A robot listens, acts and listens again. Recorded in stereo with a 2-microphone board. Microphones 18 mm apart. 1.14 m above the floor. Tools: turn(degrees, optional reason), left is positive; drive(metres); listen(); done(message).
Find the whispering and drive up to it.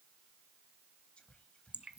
turn(degrees=90)
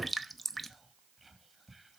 drive(metres=1.0)
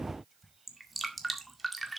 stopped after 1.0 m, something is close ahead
done("Arrived at the whispering, straight ahead.")